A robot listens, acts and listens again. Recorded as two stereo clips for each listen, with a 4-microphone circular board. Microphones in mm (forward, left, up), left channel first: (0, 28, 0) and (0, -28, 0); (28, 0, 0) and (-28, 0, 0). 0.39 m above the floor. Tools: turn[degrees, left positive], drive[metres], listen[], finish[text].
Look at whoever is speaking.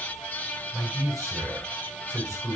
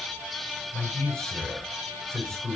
Thought: The man speaking: 75° right.
Action: turn[-75]
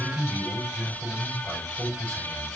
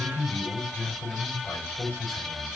Action: finish[Facing the man speaking.]